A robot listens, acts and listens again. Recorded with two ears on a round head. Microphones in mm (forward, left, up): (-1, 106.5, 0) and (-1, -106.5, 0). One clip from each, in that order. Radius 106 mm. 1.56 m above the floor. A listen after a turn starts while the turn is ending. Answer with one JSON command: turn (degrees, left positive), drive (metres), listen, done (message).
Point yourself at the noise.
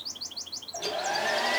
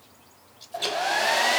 {"turn": -40}
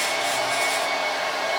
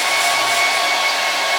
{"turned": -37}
{"turn": -100}
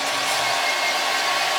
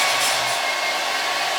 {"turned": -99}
{"done": "Found it: a hair dryer, straight ahead, 1 to 2 m away."}